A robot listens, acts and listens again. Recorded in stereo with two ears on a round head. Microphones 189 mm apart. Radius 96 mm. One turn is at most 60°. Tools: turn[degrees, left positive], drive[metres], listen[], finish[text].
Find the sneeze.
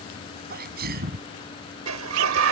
Thought: The sneeze: about 50° right or 130° right.
Action: turn[-50]
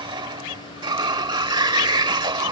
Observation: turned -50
Action: listen[]
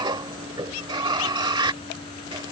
Action: finish[I heard a sneeze, but can't make it out now. It was about straight ahead or 80° right.]